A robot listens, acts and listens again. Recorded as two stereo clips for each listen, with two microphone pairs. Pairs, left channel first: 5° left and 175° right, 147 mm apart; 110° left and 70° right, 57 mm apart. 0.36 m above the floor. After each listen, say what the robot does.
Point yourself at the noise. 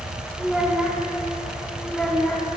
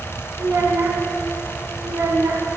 Turn 80° right.
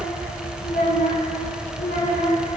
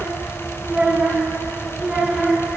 Turn 10° left.
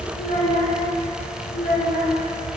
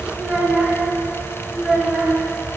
Turn 15° left.
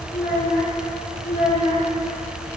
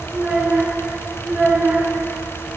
Found it: a child speaking, straight ahead.